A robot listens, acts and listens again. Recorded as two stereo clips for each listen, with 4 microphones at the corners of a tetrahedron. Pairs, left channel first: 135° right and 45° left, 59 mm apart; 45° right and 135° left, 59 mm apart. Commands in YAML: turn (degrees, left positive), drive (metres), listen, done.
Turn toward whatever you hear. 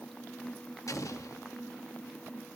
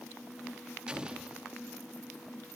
turn: -150
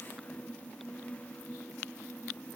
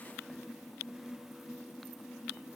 done: "Facing where the explosion came from. I can't hear it now."